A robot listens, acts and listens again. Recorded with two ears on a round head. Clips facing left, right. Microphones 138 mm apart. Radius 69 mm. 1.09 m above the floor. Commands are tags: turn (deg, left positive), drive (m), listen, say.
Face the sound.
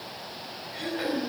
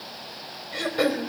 <turn deg="-90"/>
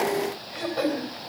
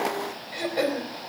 <turn deg="-15"/>
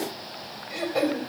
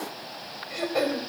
<say>Facing the throat clearing, over 4 m away.</say>